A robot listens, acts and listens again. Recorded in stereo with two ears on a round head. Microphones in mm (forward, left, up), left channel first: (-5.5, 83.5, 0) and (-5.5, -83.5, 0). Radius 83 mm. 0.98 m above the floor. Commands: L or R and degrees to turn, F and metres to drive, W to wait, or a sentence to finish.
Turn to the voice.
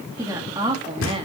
R30
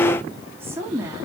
R15
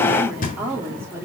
R15
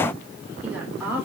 R10
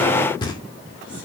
W
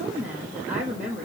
R10
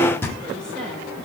W
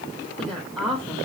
Facing the woman speaking, over 4 m away.